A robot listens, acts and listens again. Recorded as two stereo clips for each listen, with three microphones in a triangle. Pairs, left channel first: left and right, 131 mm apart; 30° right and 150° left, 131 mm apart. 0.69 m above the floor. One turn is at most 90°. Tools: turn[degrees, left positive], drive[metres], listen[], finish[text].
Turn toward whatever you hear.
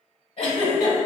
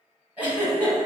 Thought: The giggle: 70° left.
Action: turn[70]
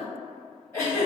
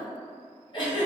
Thought: The giggle is now 20° left.
Action: turn[20]
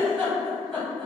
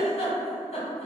Action: finish[Found it: a giggle, straight ahead.]